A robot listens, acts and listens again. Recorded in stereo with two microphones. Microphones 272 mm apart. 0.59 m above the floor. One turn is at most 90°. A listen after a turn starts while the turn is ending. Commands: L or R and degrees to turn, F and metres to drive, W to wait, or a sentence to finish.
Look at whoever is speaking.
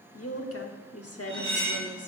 L60
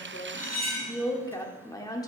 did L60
L15
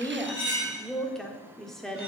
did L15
Facing the woman speaking, 1 to 2 m away.